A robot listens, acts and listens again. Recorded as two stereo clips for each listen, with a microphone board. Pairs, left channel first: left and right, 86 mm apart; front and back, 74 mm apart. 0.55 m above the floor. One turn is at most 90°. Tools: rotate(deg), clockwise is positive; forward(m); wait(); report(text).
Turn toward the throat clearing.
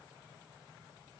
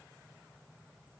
wait()
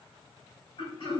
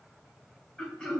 rotate(-75)
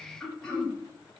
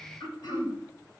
report("Found it: throat clearing, straight ahead.")